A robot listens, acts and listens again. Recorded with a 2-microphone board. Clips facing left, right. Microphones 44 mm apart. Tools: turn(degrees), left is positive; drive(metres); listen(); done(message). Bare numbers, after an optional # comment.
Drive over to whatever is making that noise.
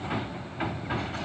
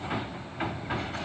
listen()
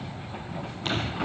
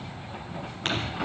listen()
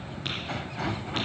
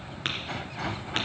# The tapping: about 55° right or 125° right.
turn(-55)
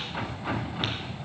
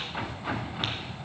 listen()
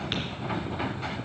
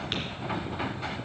listen()
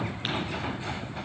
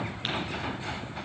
done("I heard tapping, but can't make it out now. It was about straight ahead or 70° right. I did not reach it.")